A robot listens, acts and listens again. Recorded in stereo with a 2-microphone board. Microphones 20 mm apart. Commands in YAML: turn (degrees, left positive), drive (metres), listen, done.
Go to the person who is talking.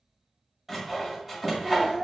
turn: -70
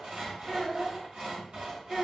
turn: -10
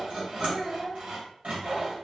drive: 1.0
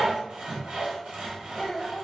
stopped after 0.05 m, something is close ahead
done: "Blocked. The child speaking is further on, straight ahead."